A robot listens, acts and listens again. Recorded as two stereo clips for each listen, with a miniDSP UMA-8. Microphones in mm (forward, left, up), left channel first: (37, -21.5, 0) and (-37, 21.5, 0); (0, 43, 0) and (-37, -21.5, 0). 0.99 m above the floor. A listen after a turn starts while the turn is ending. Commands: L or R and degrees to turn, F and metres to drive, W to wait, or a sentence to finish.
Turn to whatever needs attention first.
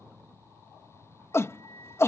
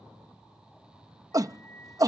R85
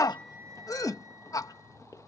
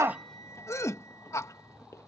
L15
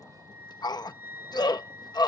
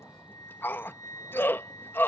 Found it: a shout, straight ahead.